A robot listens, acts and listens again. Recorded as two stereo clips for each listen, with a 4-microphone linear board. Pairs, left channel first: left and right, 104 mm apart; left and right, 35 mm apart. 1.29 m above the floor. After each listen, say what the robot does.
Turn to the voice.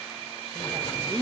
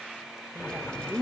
Turn 45° right.
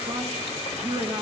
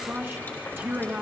Turn 95° right.
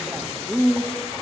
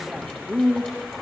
Facing the man speaking.